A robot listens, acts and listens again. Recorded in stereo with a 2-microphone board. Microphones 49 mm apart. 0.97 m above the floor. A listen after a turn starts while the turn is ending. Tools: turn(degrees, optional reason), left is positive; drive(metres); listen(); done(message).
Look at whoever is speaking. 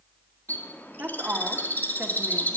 turn(degrees=-35, reason="The woman speaking: about 35° right or 145° right.")
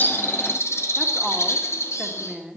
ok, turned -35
done("Found it: a woman speaking, straight ahead.")